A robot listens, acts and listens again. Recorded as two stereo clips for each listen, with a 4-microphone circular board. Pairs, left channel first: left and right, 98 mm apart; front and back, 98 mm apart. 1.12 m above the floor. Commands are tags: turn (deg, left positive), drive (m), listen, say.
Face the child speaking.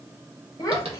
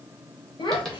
<turn deg="35"/>
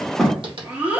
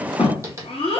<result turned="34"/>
<turn deg="-15"/>
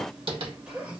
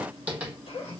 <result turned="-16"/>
<turn deg="-15"/>
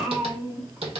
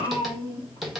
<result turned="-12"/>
<turn deg="-10"/>
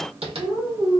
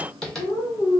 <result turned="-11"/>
<turn deg="-20"/>
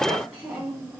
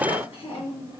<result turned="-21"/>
<say>Facing the child speaking, 1 to 2 m away.</say>